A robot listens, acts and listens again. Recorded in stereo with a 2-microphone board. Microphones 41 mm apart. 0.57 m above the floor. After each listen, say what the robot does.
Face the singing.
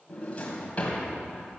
Keep listening.
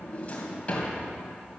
Keep listening.
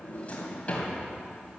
I can't make out singing, only a drawer.